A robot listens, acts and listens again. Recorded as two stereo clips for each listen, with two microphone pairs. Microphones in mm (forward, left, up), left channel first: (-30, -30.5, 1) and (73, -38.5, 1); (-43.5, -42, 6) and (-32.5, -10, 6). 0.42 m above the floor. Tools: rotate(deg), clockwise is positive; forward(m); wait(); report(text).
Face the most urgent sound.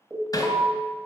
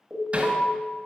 rotate(-70)
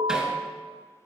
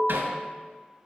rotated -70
rotate(-25)
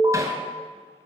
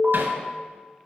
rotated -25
report("Facing the alarm, 2 to 4 m away.")